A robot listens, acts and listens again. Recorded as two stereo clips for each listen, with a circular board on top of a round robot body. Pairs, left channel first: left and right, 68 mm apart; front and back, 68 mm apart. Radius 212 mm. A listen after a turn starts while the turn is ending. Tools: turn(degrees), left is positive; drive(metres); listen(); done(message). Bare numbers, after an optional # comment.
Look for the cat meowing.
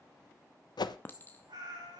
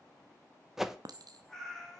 # The cat meowing: 85° right.
turn(-85)
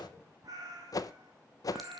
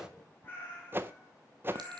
# The cat meowing is now 65° right.
turn(-65)
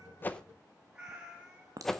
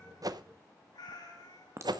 # The cat meowing is now 15° right.
turn(-15)
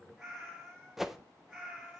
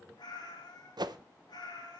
done("Found it: a cat meowing, straight ahead.")